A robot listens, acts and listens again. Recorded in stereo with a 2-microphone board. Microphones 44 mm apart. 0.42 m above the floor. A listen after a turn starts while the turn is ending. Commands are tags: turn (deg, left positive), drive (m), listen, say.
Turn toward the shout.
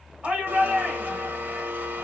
<turn deg="-30"/>
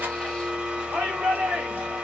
<turn deg="-115"/>
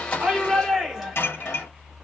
<turn deg="-10"/>
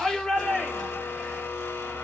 <say>Facing the shout, 1 to 2 m away.</say>